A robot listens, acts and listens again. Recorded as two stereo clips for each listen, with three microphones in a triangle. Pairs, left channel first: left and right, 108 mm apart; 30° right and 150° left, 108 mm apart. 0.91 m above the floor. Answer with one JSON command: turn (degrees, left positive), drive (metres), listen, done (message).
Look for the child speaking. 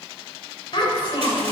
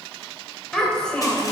{"turn": 50}
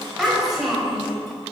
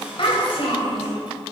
{"done": "Found it: a child speaking, straight ahead."}